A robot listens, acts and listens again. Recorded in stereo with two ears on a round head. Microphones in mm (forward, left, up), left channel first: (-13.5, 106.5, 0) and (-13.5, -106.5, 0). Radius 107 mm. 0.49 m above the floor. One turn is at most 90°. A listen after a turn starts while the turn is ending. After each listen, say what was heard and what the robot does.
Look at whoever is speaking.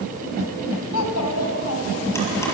The child speaking: about 70° left or 110° left. Turn 70° left.
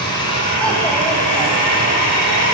Keep listening.
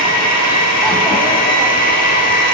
Keep listening.
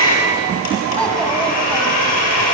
I heard a child speaking, but can't make it out now. It was about straight ahead or 40° left.